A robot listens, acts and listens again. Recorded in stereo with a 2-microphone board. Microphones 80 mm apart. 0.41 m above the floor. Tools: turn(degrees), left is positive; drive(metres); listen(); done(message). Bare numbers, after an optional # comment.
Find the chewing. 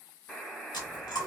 # The chewing: about 60° left or 120° left.
turn(60)
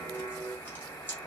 # So it is at 30° left.
turn(30)
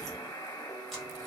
listen()
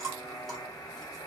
done("Found it: chewing, straight ahead, 1 to 2 m away.")